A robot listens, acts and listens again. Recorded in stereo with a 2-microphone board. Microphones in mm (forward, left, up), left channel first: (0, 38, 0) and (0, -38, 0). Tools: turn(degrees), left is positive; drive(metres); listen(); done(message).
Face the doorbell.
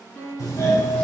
turn(degrees=45)
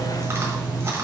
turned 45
turn(degrees=75)
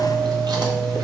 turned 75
done("Found it: a doorbell, straight ahead.")